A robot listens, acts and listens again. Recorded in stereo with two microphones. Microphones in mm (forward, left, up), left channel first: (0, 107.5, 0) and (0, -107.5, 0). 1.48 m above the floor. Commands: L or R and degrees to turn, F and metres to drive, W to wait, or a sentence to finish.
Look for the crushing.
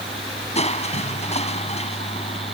L30
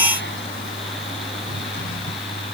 W
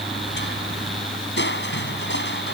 L125
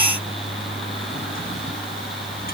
W
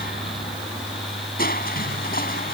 L45
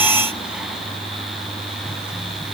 W
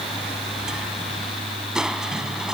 W
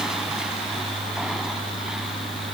Facing where the crushing came from. I can't hear it now.